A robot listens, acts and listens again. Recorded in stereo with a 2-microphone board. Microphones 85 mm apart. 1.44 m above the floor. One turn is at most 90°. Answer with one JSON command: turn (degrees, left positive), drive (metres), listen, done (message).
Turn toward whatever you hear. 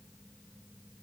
{"listen": true}
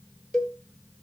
{"turn": 30}
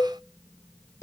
{"turn": 90}
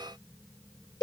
{"turn": 50}
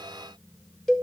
{"done": "Found it: a cowbell, straight ahead, 1 to 2 m away."}